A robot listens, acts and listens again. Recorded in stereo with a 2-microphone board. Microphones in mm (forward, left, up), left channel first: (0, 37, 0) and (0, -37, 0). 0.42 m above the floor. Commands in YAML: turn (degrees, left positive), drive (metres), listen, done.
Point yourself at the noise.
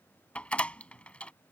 turn: 15
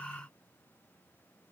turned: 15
listen: true
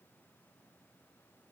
done: "I heard a door slam, but can't make it out now. It was about straight ahead or 150° left."